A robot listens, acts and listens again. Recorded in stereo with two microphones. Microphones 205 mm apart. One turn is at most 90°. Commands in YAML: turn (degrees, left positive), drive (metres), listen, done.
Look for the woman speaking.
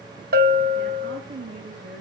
turn: -70
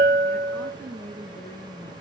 turn: 20
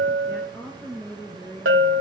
turn: 15
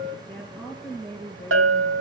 done: "Facing the woman speaking, 2 to 4 m away."